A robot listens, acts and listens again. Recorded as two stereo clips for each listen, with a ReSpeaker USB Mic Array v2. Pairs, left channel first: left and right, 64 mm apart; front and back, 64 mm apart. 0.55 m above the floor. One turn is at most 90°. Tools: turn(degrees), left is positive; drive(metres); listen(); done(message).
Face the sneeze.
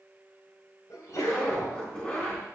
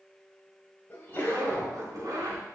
turn(degrees=60)
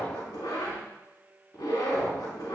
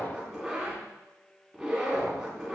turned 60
done("I heard a sneeze from this way, but can't make it out now.")